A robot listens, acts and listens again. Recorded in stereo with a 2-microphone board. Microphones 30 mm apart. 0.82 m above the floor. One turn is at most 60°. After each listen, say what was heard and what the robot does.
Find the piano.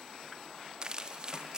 Keep listening.
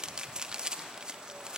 Keep listening.
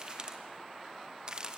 I can't make out a piano, only crumpling.